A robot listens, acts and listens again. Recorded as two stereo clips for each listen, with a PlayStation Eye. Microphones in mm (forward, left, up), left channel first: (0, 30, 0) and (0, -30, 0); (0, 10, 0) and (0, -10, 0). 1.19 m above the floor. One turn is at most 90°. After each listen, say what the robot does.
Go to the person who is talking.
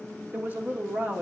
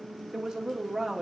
Turn 30° right.
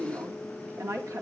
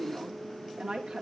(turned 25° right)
Turn 90° right.
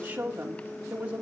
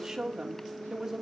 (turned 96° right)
Turn 30° right.
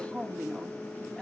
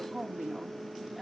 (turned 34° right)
Drive 1.0 m forward.
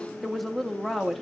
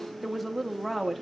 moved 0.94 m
Drive 1.0 m forward.
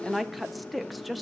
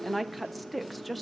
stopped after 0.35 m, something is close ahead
I am next to the woman speaking.